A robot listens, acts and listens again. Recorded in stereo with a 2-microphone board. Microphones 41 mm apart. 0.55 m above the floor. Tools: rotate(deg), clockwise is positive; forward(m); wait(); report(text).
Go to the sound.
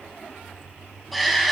rotate(-30)
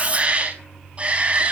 rotate(30)
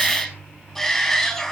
forward(1.0)
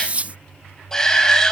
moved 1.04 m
rotate(-15)
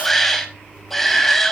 forward(1.0)
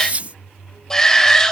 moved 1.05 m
rotate(-15)
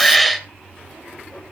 forward(1.0)
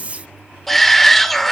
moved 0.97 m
forward(1.0)
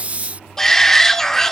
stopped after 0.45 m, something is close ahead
rotate(-15)
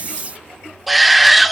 report("I am next to the shout.")